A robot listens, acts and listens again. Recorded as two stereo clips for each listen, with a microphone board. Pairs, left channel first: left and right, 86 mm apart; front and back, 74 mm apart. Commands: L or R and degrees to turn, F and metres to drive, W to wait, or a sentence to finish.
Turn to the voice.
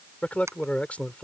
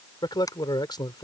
L15
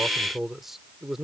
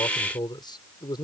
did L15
Found it: a man speaking, straight ahead.